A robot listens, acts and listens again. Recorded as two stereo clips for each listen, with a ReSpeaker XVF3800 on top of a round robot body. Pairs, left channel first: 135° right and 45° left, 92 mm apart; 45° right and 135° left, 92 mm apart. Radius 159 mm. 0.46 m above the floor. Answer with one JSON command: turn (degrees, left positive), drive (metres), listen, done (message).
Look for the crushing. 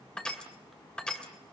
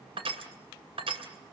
{"turn": 145}
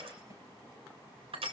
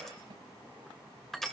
{"turn": 40}
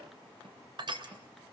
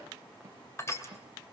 {"turn": 15}
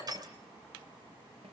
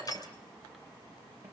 {"done": "Found it: crushing, straight ahead."}